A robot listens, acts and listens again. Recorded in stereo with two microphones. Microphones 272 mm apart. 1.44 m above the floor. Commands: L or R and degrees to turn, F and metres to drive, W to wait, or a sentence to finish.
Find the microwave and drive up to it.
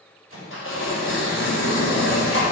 R50
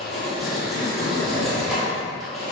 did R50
W
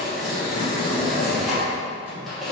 W
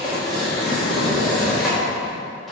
I heard a microwave, but can't make it out now. It was about straight ahead or 80° right. I did not reach it.